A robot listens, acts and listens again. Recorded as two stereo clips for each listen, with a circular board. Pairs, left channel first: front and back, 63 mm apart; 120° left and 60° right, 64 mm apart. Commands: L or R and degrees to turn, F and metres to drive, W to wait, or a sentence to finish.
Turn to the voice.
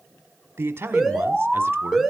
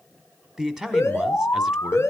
R135
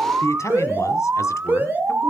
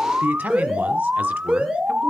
Facing the man speaking.